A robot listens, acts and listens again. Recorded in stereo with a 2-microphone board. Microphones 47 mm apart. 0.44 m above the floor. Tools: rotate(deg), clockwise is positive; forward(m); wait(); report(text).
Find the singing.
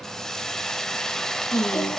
rotate(-65)
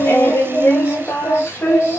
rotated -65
rotate(-50)
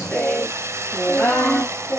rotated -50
rotate(-15)
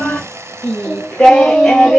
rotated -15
report("Found it: singing, straight ahead.")